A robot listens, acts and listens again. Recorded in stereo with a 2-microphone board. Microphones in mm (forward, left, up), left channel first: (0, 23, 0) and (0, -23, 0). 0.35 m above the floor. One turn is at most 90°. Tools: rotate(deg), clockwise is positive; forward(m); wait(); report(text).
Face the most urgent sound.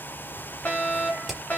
rotate(-30)
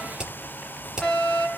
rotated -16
rotate(-15)
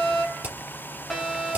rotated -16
report("Facing the fire alarm, over 4 m away.")